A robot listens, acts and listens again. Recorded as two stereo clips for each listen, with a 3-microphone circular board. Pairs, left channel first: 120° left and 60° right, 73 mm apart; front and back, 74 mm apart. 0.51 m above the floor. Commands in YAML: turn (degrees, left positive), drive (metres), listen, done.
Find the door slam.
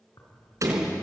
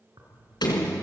turn: -15
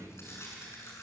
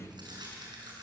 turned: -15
done: "I heard a door slam from this way, but can't make it out now."